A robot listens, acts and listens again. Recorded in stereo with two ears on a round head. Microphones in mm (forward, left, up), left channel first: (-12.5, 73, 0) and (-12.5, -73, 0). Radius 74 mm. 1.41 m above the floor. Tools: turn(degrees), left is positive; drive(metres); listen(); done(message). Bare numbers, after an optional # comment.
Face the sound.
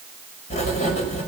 # The writing: about 45° left or 135° left.
turn(45)
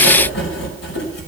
# So it is at 90° left.
turn(90)
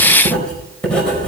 done("Facing the writing, over 4 m away.")